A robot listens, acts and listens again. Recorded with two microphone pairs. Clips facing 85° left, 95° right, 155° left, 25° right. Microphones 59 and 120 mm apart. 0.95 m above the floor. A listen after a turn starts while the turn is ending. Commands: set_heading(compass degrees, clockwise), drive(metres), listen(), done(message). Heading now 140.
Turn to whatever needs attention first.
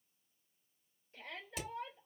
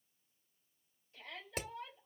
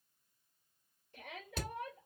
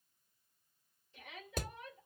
set_heading(5)
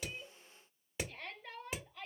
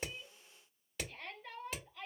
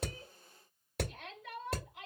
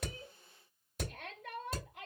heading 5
done("Found it: a shout, straight ahead, 2 to 4 m away.")